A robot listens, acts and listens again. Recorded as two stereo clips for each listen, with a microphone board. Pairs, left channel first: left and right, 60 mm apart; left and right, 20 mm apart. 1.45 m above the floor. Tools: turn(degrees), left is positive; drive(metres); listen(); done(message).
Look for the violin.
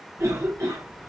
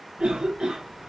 listen()
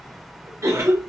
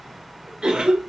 listen()
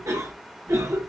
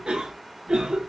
done("I can't make out a violin, only a cough.")